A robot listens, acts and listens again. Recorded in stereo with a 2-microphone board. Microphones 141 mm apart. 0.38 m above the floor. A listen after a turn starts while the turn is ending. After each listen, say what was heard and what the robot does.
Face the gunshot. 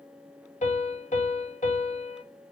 Keep listening.
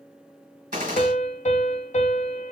The gunshot: about 70° right or 110° right. Turn 70° right.
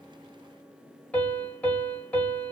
Keep listening.
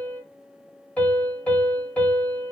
I heard a gunshot, but can't make it out now. It was about straight ahead or 40° right.